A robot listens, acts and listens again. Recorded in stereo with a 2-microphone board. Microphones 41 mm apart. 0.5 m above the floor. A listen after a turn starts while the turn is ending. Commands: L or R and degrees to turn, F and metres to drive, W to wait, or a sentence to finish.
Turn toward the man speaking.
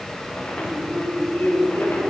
L65
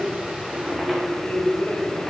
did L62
L35
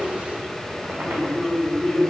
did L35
R10
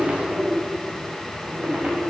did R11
Facing the man speaking.